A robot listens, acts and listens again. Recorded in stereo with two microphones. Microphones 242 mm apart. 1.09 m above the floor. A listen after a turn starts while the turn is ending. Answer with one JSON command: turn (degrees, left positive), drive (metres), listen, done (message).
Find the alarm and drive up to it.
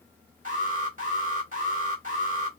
{"turn": -35}
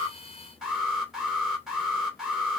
{"drive": 1.0}
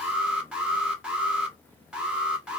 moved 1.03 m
{"drive": 1.0}
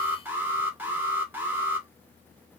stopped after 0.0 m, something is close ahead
{"turn": -10}
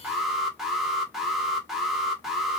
{"done": "Arrived at the alarm, straight ahead."}